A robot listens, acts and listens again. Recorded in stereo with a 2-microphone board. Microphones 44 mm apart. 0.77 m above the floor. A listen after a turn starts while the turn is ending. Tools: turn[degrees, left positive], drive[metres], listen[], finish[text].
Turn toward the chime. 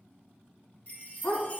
Thought: The chime: about 35° left or 145° left.
Action: turn[35]
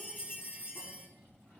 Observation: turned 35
Thought: So it is at 105° left.
Action: turn[105]
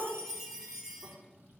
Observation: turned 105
Action: finish[Facing the chime.]